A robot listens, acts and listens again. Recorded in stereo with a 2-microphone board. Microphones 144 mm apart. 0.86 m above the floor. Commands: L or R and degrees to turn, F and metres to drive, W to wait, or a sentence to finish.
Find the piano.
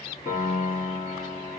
L55
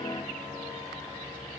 W
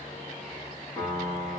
L10
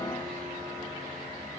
W
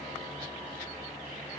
W
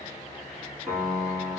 Facing the piano.